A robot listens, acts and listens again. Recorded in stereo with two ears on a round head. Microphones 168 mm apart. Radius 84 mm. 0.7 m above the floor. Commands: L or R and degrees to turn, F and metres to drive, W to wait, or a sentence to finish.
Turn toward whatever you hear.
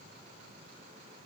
W
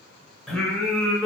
L30
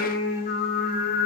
L130
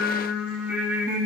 R10
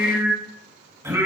R15
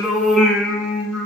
Found it: singing, straight ahead, 1 to 2 m away.